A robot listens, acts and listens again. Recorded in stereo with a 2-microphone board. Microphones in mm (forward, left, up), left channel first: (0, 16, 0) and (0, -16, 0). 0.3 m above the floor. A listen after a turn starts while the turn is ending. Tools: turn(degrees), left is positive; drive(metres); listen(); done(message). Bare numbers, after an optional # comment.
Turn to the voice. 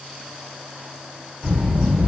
# The child speaking: about 45° right or 135° right.
turn(-45)
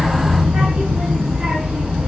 # So it is at 80° right.
turn(-80)
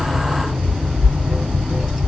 done("Facing the child speaking.")